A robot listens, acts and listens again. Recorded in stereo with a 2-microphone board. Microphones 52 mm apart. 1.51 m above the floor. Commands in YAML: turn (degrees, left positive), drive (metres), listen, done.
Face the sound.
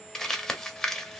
turn: 30
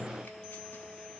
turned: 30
listen: true
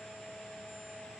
listen: true
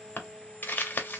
turn: 145
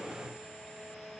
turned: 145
listen: true
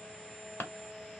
turn: 50
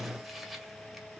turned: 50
listen: true
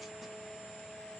listen: true
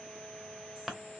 done: "Facing the crumpling, under 1 m away."